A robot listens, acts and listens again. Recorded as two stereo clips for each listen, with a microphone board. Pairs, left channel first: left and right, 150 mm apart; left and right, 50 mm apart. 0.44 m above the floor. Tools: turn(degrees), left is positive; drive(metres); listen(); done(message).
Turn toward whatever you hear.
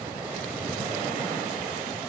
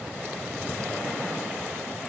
listen()
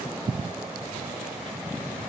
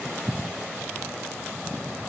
listen()
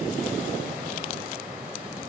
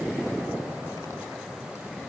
done("I can't make out anything to turn to.")